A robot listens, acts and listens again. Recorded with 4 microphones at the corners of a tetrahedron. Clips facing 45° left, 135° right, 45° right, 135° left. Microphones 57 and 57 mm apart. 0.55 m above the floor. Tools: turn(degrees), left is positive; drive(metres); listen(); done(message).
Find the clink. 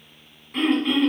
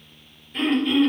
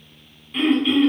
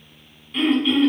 listen()
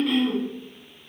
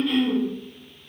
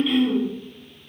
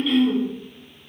listen()
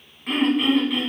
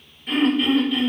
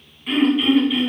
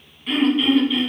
done("I can't make out a clink, only throat clearing.")